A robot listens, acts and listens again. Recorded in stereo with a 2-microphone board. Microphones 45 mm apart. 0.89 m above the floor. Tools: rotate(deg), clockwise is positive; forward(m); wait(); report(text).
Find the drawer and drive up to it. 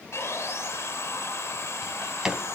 rotate(30)
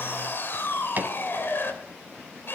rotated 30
rotate(140)
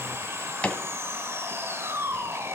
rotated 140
rotate(-25)
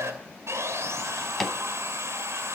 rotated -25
forward(1.0)
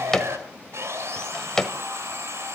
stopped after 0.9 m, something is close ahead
rotate(-15)
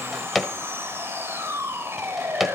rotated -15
report("Arrived at the drawer, straight ahead.")